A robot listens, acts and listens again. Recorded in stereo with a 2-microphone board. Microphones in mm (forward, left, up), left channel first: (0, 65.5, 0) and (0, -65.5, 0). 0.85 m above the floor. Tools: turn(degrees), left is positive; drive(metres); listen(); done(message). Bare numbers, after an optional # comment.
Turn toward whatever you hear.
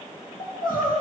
turn(90)
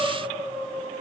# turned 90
done("Found it: crying, straight ahead, over 4 m away.")